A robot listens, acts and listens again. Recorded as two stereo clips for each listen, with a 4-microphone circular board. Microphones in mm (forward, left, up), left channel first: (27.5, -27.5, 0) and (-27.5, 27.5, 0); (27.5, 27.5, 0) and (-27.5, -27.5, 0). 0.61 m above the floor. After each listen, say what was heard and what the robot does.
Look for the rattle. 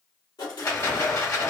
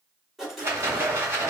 The rattle: 85° right. Turn 85° right.
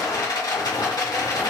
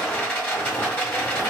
The rattle is now 15° right. Turn 15° right.
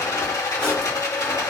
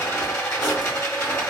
Found it: a rattle, straight ahead.